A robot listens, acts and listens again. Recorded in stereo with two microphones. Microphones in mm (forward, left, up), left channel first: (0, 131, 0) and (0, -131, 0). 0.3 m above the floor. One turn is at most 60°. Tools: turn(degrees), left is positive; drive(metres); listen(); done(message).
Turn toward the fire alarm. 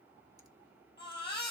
listen()
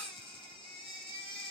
listen()
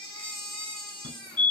turn(degrees=60)
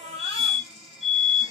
turn(degrees=25)
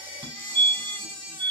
done("Found it: a fire alarm, straight ahead, over 4 m away.")